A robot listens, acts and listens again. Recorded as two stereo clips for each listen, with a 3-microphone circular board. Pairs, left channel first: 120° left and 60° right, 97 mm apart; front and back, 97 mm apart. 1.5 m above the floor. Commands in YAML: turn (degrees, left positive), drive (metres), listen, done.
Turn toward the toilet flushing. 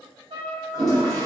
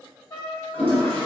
turn: -10
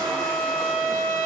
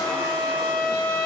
listen: true
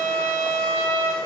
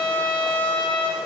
listen: true
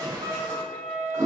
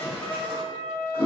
done: "Facing the toilet flushing, 1 to 2 m away."